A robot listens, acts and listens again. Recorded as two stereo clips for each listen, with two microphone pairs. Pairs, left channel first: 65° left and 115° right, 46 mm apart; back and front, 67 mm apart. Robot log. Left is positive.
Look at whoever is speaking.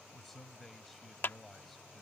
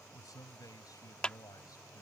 note: The man speaking: 155° left.
cmd yaw +155
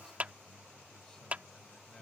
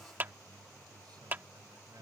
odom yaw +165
note: Nothing new. It was at 10° right.
cmd yaw -10
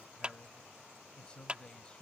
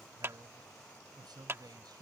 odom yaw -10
end: Found it: a man speaking, straight ahead.